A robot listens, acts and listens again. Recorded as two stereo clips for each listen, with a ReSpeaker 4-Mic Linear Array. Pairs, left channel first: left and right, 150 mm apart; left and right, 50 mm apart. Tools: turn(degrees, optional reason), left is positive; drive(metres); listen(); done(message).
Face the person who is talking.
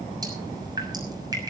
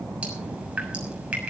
listen()
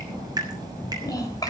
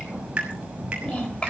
turn(degrees=25, reason="The child speaking: about 25° left or 155° left.")
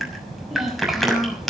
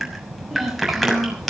done("Facing the child speaking.")